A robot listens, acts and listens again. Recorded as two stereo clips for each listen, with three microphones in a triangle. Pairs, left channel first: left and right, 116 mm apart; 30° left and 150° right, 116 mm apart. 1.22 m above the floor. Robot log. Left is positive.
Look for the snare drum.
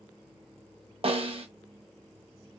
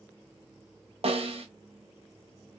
note: The snare drum: 125° right.
cmd yaw -125
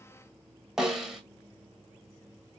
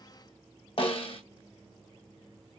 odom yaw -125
end: Facing the snare drum, under 1 m away.